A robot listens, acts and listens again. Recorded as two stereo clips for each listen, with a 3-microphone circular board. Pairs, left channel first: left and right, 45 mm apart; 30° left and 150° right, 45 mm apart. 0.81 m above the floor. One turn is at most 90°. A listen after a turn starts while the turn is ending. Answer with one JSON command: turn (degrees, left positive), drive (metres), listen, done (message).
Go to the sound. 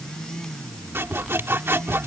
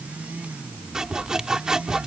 {"turn": -75}
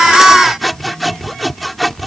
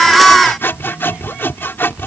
{"drive": 1.0}
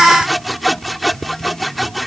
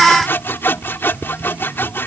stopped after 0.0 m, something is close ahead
{"done": "Blocked. The sawing is further on, straight ahead."}